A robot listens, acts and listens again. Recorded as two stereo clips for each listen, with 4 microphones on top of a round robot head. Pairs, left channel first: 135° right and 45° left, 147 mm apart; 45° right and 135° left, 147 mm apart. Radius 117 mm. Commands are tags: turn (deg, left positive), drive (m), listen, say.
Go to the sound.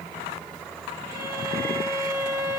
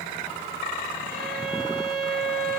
<turn deg="115"/>
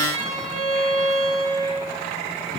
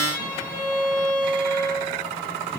<turn deg="-20"/>
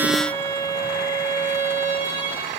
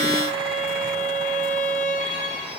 <drive m="1.0"/>
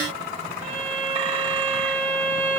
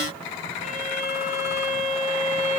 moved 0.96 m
<turn deg="-10"/>
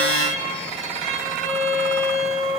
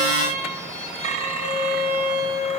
<drive m="1.0"/>
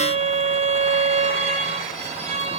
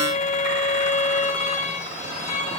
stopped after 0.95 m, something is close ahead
<say>Arrived at the violin, straight ahead.</say>